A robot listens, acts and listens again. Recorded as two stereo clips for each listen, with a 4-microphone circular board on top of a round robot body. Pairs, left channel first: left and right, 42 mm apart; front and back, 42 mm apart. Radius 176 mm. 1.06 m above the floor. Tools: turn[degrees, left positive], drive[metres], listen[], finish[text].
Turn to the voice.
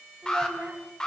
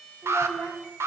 Thought: The child speaking: 150° right.
Action: turn[-150]
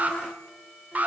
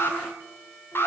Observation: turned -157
Action: listen[]
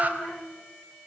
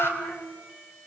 Thought: The child speaking is now 10° left.
Action: turn[10]
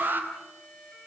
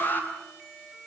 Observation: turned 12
Action: listen[]
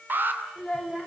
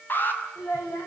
Action: finish[Facing the child speaking.]